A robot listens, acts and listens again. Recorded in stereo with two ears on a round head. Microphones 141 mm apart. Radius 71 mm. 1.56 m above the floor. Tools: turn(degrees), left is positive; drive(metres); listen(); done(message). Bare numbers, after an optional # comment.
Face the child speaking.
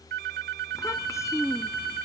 # The child speaking: about 20° left or 160° left.
turn(20)
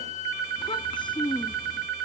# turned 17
# The child speaking: about 30° left or 150° left.
turn(30)
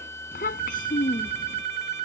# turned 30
# So it is at 120° left.
turn(120)
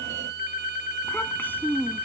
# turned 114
# The child speaking is now 15° left.
turn(15)
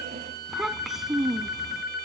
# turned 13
done("Facing the child speaking.")